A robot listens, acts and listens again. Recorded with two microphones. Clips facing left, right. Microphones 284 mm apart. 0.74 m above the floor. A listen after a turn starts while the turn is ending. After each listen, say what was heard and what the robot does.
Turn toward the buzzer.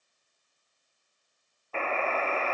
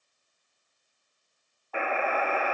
Turn 30° right.
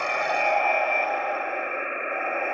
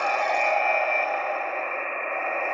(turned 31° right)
So it is at 15° left. Turn 15° left.
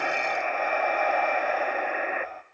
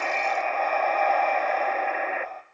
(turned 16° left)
Facing the buzzer, under 1 m away.